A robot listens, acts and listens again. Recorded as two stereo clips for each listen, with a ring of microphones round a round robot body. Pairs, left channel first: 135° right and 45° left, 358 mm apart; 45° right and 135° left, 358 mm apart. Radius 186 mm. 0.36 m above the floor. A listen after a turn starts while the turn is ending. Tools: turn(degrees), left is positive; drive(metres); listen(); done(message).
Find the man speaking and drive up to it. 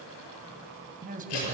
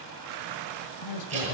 turn(degrees=-20)
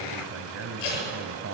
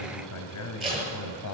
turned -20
drive(metres=1.0)
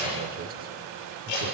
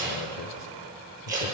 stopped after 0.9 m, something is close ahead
listen()
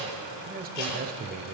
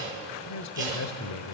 turn(degrees=-15)
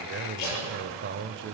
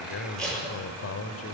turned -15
done("Arrived at the man speaking, straight ahead.")